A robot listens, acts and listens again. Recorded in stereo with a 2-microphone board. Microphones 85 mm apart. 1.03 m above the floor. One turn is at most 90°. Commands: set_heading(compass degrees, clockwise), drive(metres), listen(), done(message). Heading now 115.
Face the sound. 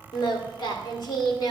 set_heading(60)
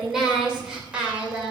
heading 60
set_heading(75)
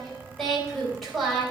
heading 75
done("Facing the singing, 2 to 4 m away.")